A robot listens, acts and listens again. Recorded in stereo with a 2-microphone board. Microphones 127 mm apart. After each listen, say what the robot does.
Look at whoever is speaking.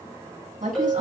Turn 90° right.
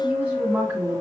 Turn 10° right.
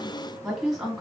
Facing the woman speaking.